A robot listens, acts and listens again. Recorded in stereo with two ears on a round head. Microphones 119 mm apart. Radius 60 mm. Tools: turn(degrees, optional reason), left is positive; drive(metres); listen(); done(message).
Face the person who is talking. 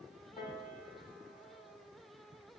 listen()
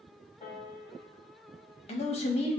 turn(degrees=50, reason="The man speaking: about 50° left or 130° left.")
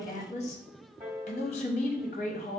turn(degrees=65, reason="So it is at 65° left.")
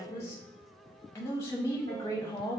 turn(degrees=25, reason="The man speaking is now 25° left.")
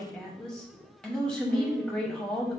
done("Found it: a man speaking, straight ahead.")